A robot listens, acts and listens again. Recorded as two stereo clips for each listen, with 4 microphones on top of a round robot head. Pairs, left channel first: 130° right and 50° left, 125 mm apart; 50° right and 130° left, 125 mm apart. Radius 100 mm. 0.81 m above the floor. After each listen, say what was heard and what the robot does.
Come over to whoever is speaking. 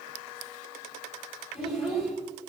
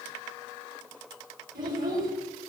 The child speaking: 140° left. Turn 140° left.
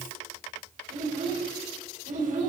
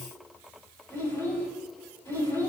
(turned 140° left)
The child speaking is now 25° left. Turn 25° left.
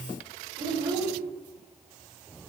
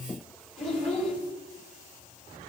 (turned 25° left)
The child speaking is now 10° right. Turn 10° right.
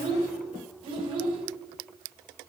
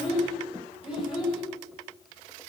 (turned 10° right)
Drive 1.0 m forward.
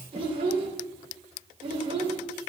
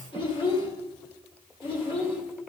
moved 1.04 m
Drive 1.0 m forward.
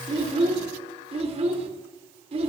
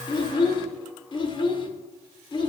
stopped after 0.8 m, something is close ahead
Arrived at the child speaking, straight ahead.